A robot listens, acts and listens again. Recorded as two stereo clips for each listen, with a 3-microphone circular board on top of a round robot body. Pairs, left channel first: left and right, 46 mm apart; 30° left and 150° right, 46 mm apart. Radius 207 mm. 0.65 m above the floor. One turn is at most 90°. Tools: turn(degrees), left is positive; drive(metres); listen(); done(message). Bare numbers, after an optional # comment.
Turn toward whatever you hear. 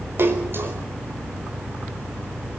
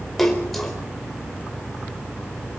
# The splash: 60° right.
turn(-60)
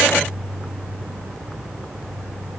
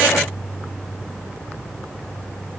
done("I heard a splash from this way, but can't make it out now.")